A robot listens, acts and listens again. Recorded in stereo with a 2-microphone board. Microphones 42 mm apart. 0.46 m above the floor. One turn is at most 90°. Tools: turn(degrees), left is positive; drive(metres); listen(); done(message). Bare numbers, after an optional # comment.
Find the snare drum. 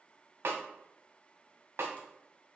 # The snare drum: about 75° right or 105° right.
turn(-75)
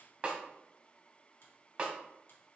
# So it is at 30° right.
turn(-30)
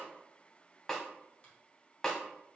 # The snare drum is now 10° left.
turn(10)
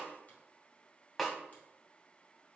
done("Facing the snare drum.")